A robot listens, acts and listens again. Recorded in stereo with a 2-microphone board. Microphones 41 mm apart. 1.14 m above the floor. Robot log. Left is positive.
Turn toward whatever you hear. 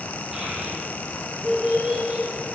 note: The child speaking: about 20° right or 160° right.
cmd yaw -20
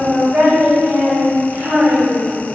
note: So it is at 130° right.
cmd yaw -130
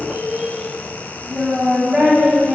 note: The child speaking is now 25° right.
cmd yaw -25
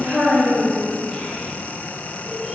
end: Found it: a child speaking, straight ahead.